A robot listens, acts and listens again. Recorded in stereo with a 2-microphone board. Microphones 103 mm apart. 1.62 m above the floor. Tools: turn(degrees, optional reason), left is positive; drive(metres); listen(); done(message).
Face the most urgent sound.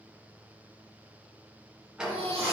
turn(degrees=-75, reason="The baby crying: about 75° right or 105° right.")
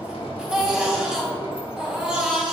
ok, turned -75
turn(degrees=-15, reason="So it is at 15° right.")
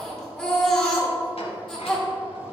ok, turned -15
done("Facing the baby crying.")